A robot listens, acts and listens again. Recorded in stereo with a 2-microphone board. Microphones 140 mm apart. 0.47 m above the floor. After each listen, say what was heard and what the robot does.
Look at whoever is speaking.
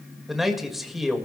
Turn 30° left.
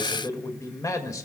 So it is at 150° left. Turn 150° left.
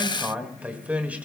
The man speaking is now 10° right. Turn 10° right.
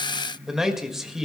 Found it: a man speaking, straight ahead, 1 to 2 m away.